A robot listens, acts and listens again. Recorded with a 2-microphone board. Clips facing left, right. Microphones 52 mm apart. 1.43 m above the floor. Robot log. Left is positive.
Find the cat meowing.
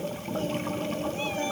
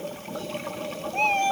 note: The cat meowing: about 65° right or 115° right.
cmd yaw -65
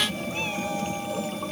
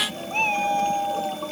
note: So it is at 55° right.
cmd yaw -55
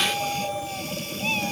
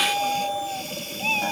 note: The cat meowing is now 20° right.
cmd yaw -20
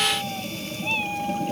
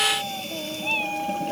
end: Found it: a cat meowing, straight ahead.